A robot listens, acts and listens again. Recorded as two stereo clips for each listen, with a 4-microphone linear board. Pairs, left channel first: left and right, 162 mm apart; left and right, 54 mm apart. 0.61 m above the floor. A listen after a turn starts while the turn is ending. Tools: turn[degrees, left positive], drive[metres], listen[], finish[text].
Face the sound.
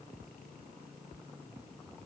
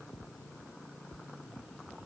Action: listen[]
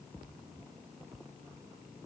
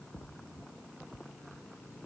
Action: listen[]
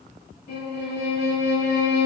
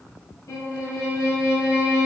Action: turn[90]
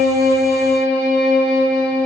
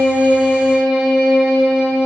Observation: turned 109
Thought: So it is at 15° right.
Action: turn[-15]
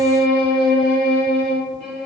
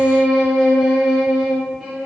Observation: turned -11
Action: finish[Found it: a violin, straight ahead, 1 to 2 m away.]